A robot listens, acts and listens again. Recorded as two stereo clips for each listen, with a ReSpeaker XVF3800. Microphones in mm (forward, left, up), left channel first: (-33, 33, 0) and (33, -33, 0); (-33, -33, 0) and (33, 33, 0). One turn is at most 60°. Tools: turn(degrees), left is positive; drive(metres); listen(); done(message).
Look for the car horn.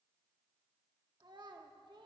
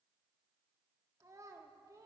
listen()
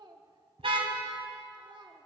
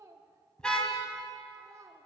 turn(degrees=-55)
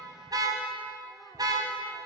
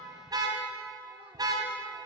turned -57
done("Found it: a car horn, straight ahead.")